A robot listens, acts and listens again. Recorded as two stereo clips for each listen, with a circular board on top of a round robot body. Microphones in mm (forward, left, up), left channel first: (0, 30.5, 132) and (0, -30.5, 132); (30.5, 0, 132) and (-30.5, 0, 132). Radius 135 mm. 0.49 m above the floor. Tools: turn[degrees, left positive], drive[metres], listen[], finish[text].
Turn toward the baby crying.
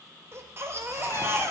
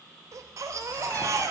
Thought: The baby crying: 140° right.
Action: turn[-140]
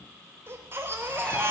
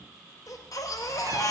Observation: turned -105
Thought: The baby crying is now 35° right.
Action: turn[-35]
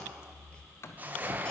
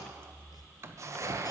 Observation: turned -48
Thought: The baby crying is now 15° left.
Action: turn[15]
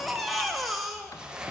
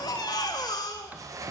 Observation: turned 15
Action: finish[Found it: a baby crying, straight ahead.]